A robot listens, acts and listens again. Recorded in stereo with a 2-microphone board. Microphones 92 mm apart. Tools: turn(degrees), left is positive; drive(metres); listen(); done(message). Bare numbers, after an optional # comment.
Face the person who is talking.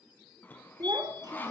# The child speaking: about 45° right or 135° right.
turn(-45)
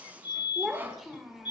done("Facing the child speaking, 2 to 4 m away.")